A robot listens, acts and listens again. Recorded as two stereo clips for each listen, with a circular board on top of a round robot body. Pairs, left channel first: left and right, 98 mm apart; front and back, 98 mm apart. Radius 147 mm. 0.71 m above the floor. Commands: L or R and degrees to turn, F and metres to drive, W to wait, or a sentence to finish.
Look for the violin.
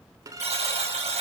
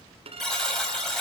R150
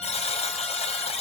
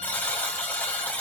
W
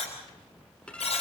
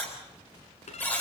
L10
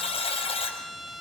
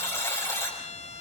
Facing the violin.